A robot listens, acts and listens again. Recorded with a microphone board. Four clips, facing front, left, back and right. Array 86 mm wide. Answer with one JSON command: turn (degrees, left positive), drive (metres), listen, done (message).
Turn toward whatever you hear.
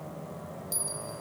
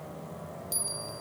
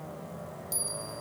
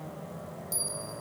{"turn": 95}
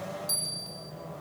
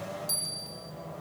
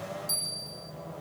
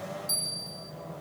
{"turn": 45}
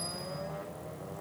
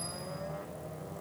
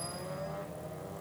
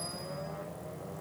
{"done": "Found it: a bell, straight ahead."}